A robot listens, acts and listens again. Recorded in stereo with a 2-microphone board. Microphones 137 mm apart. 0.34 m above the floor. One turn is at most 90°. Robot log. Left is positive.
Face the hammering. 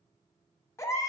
cmd idle
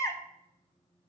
cmd idle
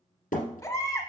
cmd yaw +90
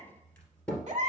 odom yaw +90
note: So it is at 10° left.
cmd yaw +10
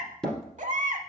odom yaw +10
end: Facing the hammering, 2 to 4 m away.